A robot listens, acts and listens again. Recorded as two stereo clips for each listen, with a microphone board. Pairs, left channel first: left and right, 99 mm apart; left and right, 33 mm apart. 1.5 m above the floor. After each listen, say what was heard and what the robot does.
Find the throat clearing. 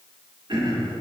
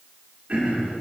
The throat clearing: about 55° right or 125° right. Turn 55° right.
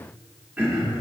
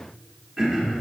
So it is at 20° right. Turn 20° right.
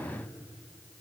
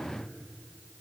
Keep listening.
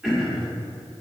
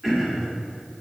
Facing the throat clearing, 1 to 2 m away.